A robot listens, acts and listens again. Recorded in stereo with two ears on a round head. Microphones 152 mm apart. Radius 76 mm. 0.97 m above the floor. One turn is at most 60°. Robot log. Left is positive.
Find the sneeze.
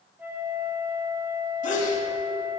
note: The sneeze: about 45° left or 135° left.
cmd yaw +45
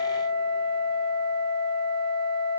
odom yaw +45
cmd idle
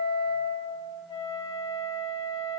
end: I heard a sneeze, but can't make it out now. It was about straight ahead or 90° left.